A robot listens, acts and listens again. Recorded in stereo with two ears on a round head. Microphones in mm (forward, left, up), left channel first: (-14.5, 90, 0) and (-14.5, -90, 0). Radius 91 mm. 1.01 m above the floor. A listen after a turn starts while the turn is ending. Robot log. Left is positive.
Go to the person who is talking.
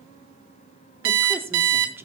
cmd yaw -30
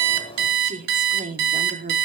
note: So it is at 135° right.
cmd yaw -135
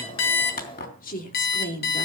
note: The woman speaking is now 45° left.
cmd yaw +45
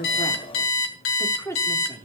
note: The woman speaking is now 15° left.
cmd yaw +15
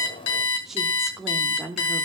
cmd fwd 1.0
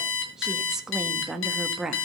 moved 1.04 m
cmd fwd 1.0
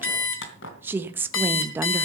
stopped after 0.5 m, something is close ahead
note: The woman speaking is now 10° right.
cmd yaw -10
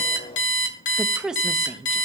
end: I am next to the woman speaking.